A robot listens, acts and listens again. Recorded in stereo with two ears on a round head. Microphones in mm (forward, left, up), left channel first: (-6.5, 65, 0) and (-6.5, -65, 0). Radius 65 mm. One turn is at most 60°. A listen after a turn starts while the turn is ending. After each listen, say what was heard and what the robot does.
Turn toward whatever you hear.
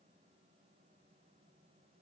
Keep listening.
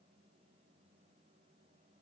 Keep listening.
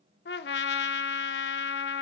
Turn 60° left.
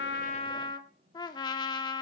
So it is at 30° left. Turn 30° left.
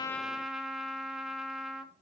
Found it: a trumpet, straight ahead.